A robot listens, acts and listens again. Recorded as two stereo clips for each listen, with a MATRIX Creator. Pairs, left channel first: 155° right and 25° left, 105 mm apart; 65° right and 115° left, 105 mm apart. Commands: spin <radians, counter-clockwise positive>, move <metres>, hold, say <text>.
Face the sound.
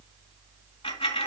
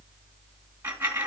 spin 3.14
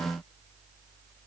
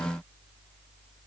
say I heard a dropped coin from this way, but can't make it out now.